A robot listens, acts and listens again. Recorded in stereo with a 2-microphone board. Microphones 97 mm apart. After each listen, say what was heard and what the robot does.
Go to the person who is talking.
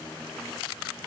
Keep listening.
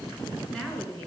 Turn 30° left.
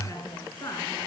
So it is at 145° left. Turn 145° left.
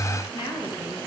The woman speaking is now 45° left. Turn 45° left.
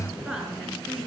Drive 1.0 m forward.
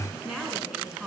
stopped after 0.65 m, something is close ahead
Something is in my way. I am facing the woman speaking but have not reached it.